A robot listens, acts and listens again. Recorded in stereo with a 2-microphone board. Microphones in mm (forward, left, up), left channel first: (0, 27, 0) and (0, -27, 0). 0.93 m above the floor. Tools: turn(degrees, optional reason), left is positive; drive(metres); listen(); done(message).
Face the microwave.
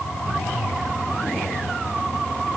listen()
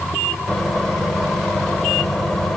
turn(degrees=30)
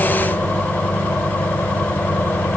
turn(degrees=145, reason="So it is at 145° left.")
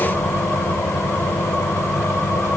turn(degrees=55, reason="The microwave is now 55° left.")
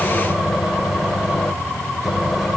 done("Facing the microwave.")